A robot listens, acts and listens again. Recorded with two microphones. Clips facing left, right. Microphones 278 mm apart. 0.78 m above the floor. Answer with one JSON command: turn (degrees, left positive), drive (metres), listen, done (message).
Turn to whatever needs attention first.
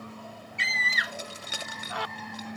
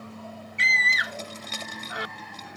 {"turn": -20}
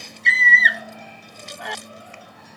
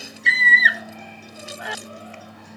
{"done": "Facing the scream."}